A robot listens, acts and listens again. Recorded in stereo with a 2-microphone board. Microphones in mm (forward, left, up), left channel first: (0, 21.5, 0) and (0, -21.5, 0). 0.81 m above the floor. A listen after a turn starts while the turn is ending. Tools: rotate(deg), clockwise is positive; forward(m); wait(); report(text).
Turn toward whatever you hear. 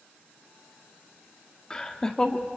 rotate(-20)
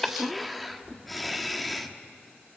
report("Found it: laughter, straight ahead.")